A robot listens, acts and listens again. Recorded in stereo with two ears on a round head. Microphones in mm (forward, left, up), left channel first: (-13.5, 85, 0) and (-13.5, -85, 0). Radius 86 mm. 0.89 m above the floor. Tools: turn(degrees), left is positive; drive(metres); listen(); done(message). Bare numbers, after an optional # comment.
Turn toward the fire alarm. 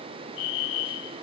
# The fire alarm: about 75° left or 105° left.
turn(75)
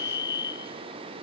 # So it is at 20° left.
turn(20)
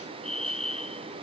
done("Found it: a fire alarm, straight ahead.")